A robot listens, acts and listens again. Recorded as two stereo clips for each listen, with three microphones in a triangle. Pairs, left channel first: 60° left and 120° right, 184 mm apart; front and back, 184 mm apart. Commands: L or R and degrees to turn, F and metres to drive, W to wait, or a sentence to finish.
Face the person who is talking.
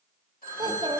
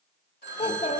R60
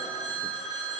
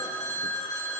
W
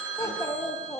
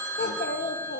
R10
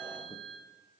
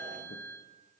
W
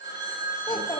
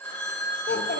Facing the child speaking.